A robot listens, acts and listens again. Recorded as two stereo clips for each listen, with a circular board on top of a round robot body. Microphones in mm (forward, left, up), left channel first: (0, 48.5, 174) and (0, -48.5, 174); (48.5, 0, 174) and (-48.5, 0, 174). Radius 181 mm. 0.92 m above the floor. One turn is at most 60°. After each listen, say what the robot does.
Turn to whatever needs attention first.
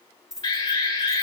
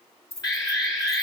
Turn 45° left.
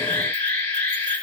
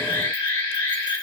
Turn 20° left.
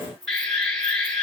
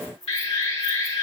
Found it: an alarm, straight ahead, 2 to 4 m away.